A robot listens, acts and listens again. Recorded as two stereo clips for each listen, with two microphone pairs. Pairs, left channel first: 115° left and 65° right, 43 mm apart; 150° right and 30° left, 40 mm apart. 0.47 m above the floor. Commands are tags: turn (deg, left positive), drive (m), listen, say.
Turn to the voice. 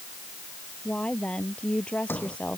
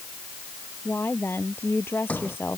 <turn deg="180"/>
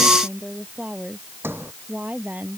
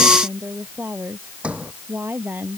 <turn deg="-15"/>
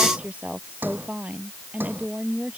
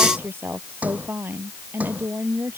<say>Found it: a woman speaking, straight ahead.</say>